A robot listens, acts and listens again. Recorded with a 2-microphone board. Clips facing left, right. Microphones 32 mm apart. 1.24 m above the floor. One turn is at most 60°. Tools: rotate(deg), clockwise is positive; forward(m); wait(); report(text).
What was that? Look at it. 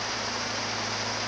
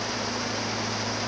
wait()
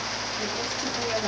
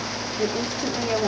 rotate(30)
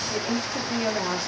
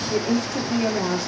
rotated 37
rotate(-15)
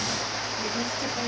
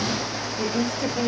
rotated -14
rotate(15)
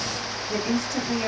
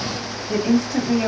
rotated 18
rotate(10)
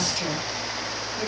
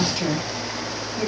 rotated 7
report("Found it: a woman speaking, straight ahead, 2 to 4 m away.")